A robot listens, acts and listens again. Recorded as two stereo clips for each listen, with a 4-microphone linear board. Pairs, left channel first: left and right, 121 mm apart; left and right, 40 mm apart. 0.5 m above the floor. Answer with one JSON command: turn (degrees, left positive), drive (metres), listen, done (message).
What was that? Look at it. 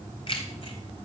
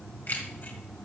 {"turn": 50}
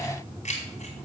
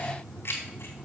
{"turn": 75}
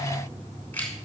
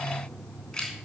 {"turn": 15}
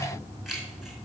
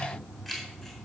{"done": "Facing the keys jangling, over 4 m away."}